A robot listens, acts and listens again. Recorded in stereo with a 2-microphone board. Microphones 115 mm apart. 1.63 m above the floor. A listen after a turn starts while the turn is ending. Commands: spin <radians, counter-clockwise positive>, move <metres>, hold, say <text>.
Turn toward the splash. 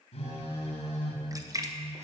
spin -0.52
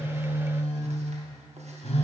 hold
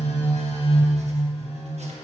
say I heard a splash, but can't make it out now. It was about straight ahead or 120° right.